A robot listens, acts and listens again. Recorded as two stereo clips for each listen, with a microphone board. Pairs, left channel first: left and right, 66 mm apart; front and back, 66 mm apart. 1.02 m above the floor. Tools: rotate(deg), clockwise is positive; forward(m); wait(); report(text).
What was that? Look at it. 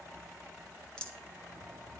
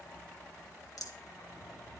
rotate(-15)
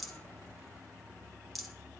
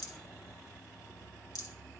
report("Facing the rattle, 2 to 4 m away.")